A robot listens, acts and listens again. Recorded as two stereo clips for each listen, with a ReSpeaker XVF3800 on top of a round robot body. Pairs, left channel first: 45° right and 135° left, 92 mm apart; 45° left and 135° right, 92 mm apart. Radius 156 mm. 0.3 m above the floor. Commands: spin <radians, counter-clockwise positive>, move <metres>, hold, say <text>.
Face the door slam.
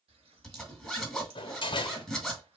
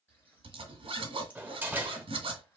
spin -1.13
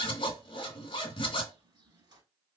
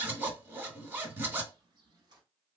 say I heard a door slam from this way, but can't make it out now.